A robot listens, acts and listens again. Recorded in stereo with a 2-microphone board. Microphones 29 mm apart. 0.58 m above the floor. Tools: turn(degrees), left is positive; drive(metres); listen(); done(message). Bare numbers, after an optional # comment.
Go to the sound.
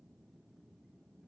listen()
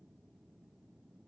listen()
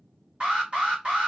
# The alarm: about 35° right or 145° right.
turn(-35)
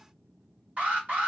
# So it is at 105° right.
turn(-105)
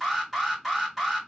drive(1.0)
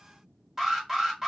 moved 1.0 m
# The alarm is now 10° right.
turn(-10)
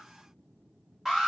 drive(1.0)
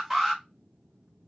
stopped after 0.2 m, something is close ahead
done("Arrived at the alarm, straight ahead.")